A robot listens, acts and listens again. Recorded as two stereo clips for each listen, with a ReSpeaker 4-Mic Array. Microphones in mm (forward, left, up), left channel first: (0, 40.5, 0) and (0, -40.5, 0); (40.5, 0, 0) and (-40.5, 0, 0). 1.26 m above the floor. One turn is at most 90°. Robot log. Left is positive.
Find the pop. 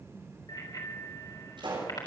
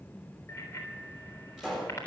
note: The pop: 95° right.
cmd yaw -90
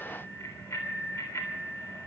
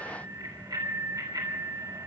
end: Facing where the pop came from. I can't hear it now.